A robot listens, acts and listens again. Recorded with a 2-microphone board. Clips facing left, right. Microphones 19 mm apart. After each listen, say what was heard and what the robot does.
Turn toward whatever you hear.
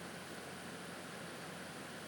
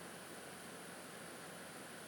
Keep listening.
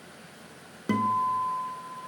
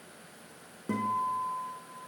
The guitar: about 70° left or 110° left. Turn 70° left.
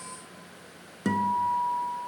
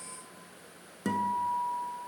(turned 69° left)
So it is at 15° left. Turn 15° left.
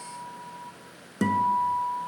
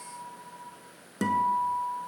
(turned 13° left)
Facing the guitar, under 1 m away.